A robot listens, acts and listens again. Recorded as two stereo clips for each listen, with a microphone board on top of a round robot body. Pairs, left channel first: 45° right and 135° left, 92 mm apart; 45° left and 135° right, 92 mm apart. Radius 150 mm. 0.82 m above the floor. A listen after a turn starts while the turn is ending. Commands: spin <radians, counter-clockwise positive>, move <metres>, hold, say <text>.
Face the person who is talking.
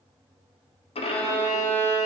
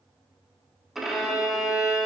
hold
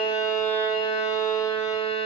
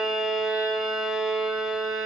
hold
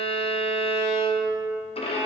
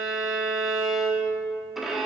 say I can't make out anyone speaking, only a violin.